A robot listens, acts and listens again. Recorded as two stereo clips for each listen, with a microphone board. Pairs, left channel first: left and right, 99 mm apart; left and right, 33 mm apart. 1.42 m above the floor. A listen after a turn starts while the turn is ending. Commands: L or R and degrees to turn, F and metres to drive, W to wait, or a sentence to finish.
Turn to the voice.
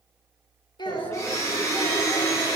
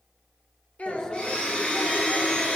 L45
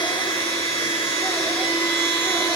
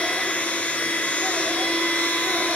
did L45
W
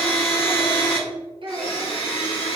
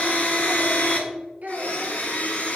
R60
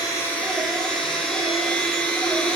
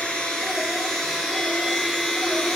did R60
W
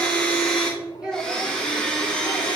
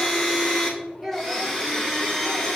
R10
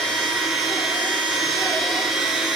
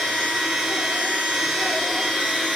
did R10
W
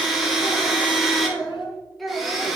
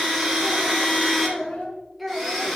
Found it: a child speaking, straight ahead.